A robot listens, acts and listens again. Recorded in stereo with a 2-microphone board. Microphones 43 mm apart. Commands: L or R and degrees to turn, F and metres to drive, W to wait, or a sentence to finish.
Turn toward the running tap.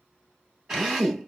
W
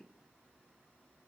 W
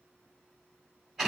I can't make out a running tap, only a drill.